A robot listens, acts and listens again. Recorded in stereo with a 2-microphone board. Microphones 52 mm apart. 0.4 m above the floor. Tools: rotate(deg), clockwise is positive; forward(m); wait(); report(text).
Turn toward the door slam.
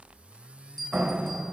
rotate(25)
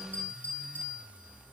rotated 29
wait()
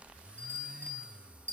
report("I heard a door slam, but can't make it out now. It was about 5° left or 125° right.")